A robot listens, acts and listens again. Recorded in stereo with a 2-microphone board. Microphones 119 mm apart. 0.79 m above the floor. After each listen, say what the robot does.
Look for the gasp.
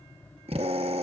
Keep listening.
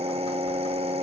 Keep listening.
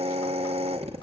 I can't make out a gasp to turn to.